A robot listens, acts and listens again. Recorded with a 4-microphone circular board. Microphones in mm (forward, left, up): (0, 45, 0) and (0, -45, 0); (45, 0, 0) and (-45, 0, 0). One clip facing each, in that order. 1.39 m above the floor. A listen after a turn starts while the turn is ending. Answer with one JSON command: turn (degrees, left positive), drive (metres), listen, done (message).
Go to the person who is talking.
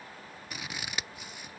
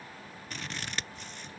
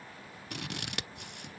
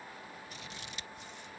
{"listen": true}
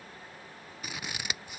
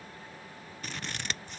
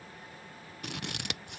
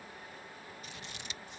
{"listen": true}
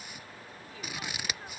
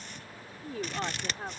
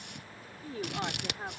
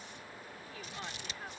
{"turn": -50}
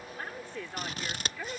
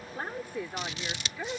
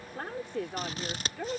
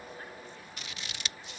{"turn": -15}
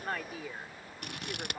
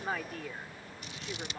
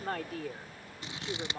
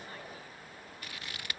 {"drive": 1.0}
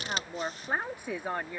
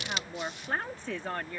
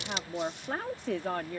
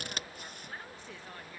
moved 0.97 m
{"turn": 10}
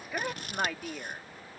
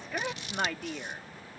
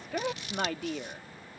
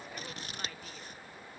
{"drive": 1.0}
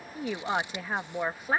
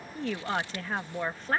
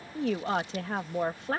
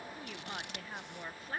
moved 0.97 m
{"turn": 10}
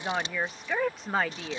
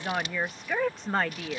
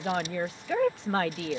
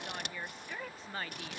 {"drive": 1.0}
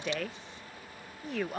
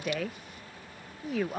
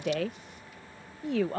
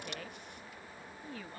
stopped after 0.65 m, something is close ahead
{"done": "I am next to the woman speaking."}